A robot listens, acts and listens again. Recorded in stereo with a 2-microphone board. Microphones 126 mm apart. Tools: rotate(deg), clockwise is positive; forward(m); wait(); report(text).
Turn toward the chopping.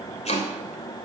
rotate(-60)
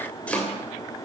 rotate(-10)
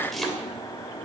report("Found it: chopping, straight ahead.")